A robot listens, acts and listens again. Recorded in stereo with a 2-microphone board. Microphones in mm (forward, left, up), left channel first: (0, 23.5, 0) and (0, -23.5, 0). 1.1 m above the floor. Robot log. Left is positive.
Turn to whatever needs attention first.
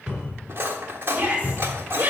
note: The shout: about 30° right or 150° right.
cmd yaw -30
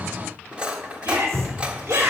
note: So it is at 120° right.
cmd yaw -120
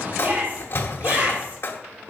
note: The shout is now 45° right.
cmd yaw -45
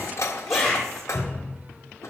end: Facing the shout, over 4 m away.